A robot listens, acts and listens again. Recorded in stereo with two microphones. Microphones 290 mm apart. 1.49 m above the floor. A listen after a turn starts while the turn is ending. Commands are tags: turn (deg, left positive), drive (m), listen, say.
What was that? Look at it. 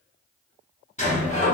<turn deg="25"/>
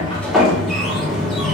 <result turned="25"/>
<say>Found it: a sliding door, straight ahead, 1 to 2 m away.</say>